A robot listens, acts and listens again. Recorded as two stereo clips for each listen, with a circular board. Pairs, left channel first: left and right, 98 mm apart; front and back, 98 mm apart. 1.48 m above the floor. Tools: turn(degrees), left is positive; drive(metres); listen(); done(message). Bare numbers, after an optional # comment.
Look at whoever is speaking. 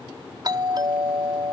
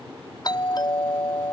listen()
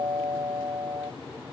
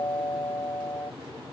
listen()
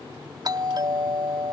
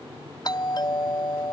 done("I can't make out anyone speaking, only a doorbell.")